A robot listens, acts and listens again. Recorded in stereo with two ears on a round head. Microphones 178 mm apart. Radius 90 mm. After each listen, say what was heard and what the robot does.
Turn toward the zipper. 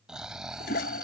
Keep listening.
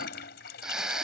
Keep listening.
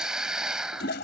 I can't make out a zipper to turn to.